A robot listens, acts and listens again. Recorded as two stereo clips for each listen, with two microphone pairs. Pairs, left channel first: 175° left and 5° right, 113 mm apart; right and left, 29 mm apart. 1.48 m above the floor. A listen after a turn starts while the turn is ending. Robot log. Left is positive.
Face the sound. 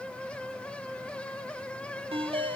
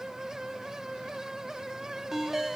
note: The ringtone: 10° left.
cmd yaw +10
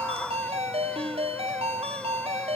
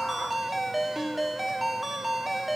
end: Facing the ringtone, 1 to 2 m away.